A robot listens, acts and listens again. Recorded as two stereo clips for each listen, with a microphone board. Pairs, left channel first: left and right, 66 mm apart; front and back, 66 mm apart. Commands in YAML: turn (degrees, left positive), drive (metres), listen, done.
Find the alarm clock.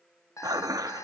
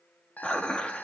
turn: 60
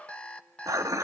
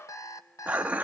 turn: 20
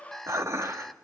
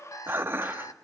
done: "Facing the alarm clock."